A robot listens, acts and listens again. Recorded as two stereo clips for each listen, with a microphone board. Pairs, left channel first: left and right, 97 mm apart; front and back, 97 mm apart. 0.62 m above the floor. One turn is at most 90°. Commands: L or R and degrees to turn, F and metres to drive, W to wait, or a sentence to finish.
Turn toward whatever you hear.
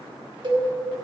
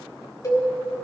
R55
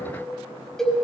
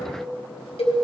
Found it: a cowbell, straight ahead.